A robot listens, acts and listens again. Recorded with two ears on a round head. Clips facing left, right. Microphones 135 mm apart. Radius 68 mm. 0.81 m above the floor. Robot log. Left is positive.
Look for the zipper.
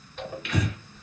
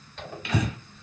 cmd yaw +30
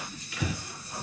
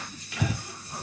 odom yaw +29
note: So it is at 20° right.
cmd yaw -20
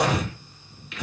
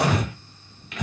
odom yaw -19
end: Facing the zipper, 1 to 2 m away.